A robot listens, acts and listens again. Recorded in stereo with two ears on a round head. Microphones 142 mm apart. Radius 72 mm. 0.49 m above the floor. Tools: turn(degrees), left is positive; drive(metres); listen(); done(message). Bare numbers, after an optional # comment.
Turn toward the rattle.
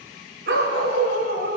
listen()
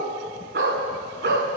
listen()
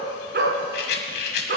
# The rattle: about 75° left or 105° left.
turn(75)
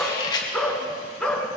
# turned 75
# So it is at 25° left.
turn(25)
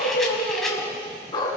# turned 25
listen()
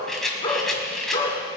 done("Facing the rattle, 1 to 2 m away.")